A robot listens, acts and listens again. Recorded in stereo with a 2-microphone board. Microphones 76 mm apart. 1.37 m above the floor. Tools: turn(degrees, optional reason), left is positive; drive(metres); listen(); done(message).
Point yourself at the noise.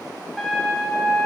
turn(degrees=30)
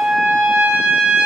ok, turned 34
turn(degrees=-30, reason="So it is at 30° right.")
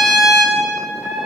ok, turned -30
done("Found it: a trumpet, straight ahead.")